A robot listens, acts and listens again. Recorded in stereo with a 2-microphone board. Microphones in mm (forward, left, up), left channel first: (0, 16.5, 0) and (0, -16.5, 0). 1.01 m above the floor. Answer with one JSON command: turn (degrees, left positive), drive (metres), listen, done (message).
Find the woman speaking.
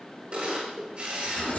{"listen": true}
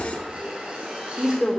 {"turn": -20}
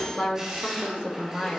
{"turn": -25}
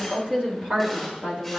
{"turn": -35}
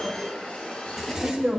{"turn": -115}
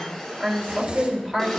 {"turn": 15}
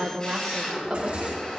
{"done": "Facing the woman speaking."}